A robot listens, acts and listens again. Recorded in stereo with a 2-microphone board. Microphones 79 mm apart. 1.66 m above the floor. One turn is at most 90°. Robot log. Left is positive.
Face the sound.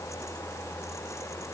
cmd idle
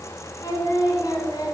note: The singing: about 55° left or 125° left.
cmd yaw +55
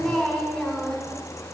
end: Facing the singing.